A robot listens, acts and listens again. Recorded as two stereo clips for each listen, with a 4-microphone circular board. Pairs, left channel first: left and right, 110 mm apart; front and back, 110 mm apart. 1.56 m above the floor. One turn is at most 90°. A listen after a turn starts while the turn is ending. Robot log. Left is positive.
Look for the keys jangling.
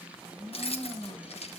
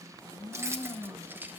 note: The keys jangling: 105° left.
cmd yaw +90
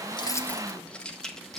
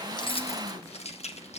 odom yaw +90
end: Found it: keys jangling, straight ahead, 1 to 2 m away.